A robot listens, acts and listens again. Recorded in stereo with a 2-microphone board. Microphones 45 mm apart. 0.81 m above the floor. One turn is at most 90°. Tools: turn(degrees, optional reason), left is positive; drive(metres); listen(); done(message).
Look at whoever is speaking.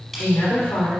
turn(degrees=65, reason="The woman speaking: about 65° left or 115° left.")
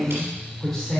turn(degrees=10, reason="So it is at 10° left.")
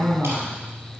done("Found it: a woman speaking, straight ahead.")